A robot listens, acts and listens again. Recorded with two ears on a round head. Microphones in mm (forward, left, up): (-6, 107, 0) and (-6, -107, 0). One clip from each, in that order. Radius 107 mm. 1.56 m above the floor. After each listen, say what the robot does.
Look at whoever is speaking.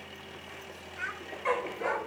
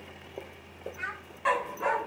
Turn 20° left.
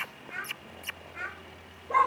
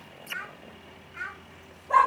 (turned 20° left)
Facing the child speaking, over 4 m away.